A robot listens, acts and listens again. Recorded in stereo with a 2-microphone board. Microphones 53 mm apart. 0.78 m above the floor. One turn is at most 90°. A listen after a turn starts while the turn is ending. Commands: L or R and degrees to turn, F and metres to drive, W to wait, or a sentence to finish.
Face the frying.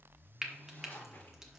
R30
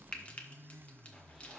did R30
L25
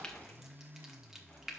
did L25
Found it: frying, straight ahead.